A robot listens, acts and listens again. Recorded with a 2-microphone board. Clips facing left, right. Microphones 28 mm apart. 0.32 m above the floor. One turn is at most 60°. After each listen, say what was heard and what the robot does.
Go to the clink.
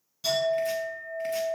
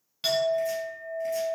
Turn 60° right.
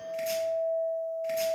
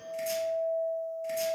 So it is at 30° right. Turn 30° right.
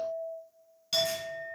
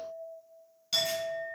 Drive 1.0 m forward.
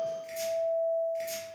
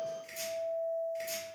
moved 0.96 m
Drive 1.0 m forward.
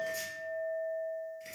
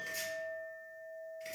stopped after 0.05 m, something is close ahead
The clink is now 15° left. Turn 15° left.
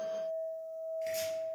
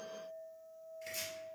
I am next to the clink.